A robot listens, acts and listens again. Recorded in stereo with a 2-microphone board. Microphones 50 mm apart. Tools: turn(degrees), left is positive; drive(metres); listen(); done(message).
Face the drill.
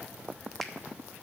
listen()
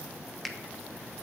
listen()
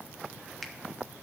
done("I can't make out a drill to turn to.")